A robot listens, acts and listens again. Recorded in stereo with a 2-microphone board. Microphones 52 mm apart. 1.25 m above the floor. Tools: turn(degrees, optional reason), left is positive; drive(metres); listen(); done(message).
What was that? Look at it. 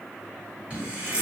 turn(degrees=-25, reason="The running tap: about 25° right or 155° right.")
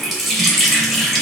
done("Found it: a running tap, straight ahead, under 1 m away.")